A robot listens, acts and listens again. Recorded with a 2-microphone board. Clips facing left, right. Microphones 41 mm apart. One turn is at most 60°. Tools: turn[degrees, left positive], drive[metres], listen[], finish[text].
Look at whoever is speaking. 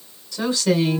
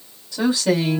Thought: The woman speaking: about 20° right or 160° right.
Action: turn[-20]
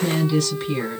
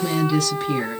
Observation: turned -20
Action: finish[Facing the woman speaking.]